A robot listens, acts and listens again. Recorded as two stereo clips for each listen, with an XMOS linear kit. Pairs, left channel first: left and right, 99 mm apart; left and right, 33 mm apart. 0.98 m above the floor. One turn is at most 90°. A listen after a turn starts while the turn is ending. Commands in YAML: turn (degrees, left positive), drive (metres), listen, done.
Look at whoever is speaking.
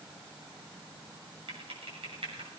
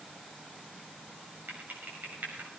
listen: true
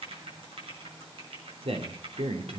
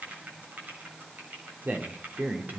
turn: -70
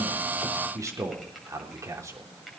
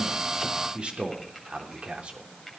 turn: -35
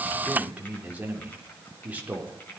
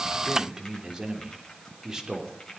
turn: -15
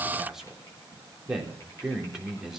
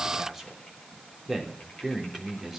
done: "Facing the man speaking."